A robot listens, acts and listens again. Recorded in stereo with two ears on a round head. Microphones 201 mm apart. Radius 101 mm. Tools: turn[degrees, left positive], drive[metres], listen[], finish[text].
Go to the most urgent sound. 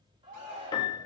Thought: The shout: about 25° right or 155° right.
Action: turn[-25]
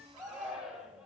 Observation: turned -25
Action: drive[1.0]
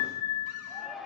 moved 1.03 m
Action: drive[1.0]
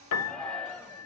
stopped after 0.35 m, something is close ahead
Action: finish[I am next to the shout.]